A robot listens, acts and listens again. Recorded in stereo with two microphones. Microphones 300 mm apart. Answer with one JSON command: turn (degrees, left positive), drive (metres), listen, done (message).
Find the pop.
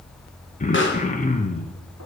{"turn": 40}
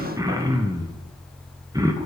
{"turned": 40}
{"listen": true}
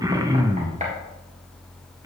{"done": "I heard a pop, but can't make it out now. It was about straight ahead or 100° left."}